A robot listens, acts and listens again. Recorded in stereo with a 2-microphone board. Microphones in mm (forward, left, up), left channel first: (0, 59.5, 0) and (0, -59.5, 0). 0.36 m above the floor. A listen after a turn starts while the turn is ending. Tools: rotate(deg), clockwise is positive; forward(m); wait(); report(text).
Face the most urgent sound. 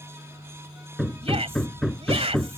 rotate(55)
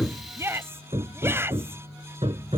rotate(25)
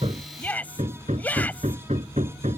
rotate(-15)
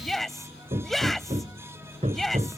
report("Found it: a shout, straight ahead.")